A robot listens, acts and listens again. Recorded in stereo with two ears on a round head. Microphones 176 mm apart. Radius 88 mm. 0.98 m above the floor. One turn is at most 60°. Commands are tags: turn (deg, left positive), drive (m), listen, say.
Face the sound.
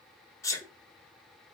<turn deg="30"/>
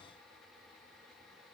<listen/>
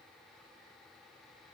<say>I heard a sneeze, but can't make it out now. It was about 15° right or 135° left.</say>